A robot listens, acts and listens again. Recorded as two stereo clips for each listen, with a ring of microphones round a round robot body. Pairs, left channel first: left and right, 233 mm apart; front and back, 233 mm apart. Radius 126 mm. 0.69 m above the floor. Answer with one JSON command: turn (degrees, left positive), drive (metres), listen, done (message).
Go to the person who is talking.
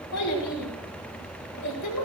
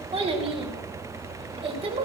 {"turn": 115}
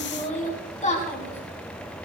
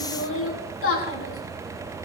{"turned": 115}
{"turn": 30}
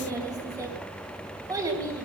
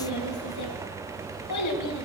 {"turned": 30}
{"turn": -15}
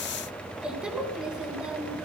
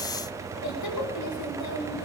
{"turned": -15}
{"drive": 1.0}
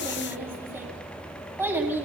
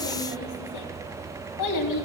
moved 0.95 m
{"turn": -10}
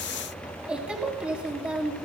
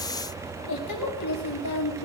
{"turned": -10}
{"drive": 1.0}
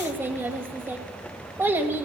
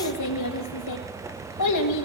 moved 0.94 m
{"turn": -10}
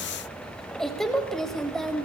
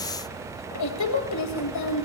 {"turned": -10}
{"drive": 1.0}
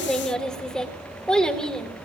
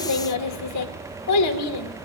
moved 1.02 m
{"drive": 1.0}
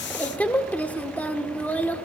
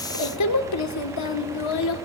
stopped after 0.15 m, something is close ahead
{"done": "Arrived at the child speaking, straight ahead."}